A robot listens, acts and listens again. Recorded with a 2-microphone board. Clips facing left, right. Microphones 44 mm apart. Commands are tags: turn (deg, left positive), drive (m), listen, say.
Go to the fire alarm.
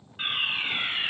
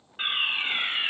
<turn deg="-15"/>
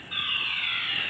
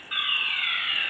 <turn deg="-150"/>
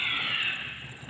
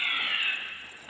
<drive m="1.0"/>
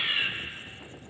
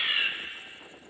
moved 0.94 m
<drive m="1.0"/>
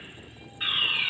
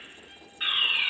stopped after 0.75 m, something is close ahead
<say>Arrived at the fire alarm, straight ahead.</say>